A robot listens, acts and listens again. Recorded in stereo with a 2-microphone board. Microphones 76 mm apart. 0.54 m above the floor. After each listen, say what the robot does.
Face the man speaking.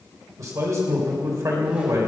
Turn 50° right.
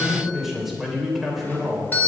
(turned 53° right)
Found it: a man speaking, straight ahead.